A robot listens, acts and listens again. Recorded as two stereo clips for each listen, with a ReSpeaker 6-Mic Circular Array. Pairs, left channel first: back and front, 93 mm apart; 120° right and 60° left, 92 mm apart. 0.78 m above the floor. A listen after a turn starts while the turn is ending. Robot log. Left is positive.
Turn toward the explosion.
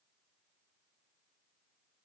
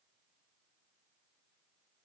cmd idle
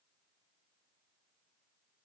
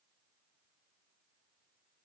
cmd idle
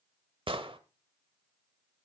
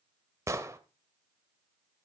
end: Found it: an explosion, straight ahead.